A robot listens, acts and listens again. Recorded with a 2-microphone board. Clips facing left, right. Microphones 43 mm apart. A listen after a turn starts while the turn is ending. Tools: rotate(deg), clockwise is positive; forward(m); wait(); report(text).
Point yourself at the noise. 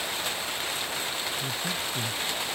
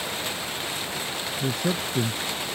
rotate(90)
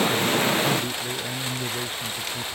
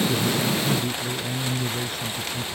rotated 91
rotate(-15)
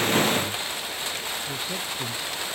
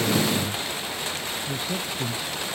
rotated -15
report("Found it: a man speaking, straight ahead.")